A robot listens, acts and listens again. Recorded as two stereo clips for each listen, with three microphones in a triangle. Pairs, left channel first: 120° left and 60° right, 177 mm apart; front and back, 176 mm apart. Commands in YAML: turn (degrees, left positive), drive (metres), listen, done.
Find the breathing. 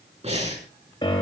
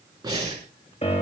turn: -110
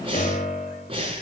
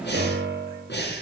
done: "Facing the breathing."